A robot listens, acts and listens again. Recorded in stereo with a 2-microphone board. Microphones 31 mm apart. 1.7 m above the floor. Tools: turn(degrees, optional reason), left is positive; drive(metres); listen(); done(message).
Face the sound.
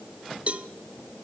turn(degrees=-40, reason="The cowbell: about 40° right or 140° right.")
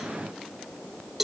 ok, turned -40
turn(degrees=-10, reason="So it is at 10° right.")
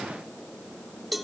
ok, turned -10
done("Found it: a cowbell, straight ahead.")